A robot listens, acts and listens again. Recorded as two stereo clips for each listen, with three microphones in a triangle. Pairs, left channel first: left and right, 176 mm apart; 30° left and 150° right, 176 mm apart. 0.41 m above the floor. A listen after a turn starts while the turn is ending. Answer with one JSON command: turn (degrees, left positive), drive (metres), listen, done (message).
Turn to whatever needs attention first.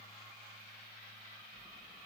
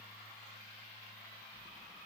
{"listen": true}
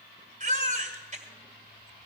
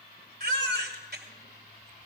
{"turn": -130}
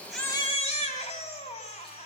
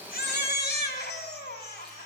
{"turn": 45}
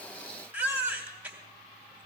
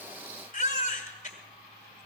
{"turn": -10}
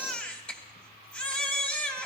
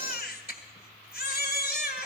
{"turn": 10}
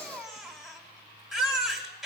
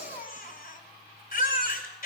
{"done": "Facing the baby crying, 1 to 2 m away."}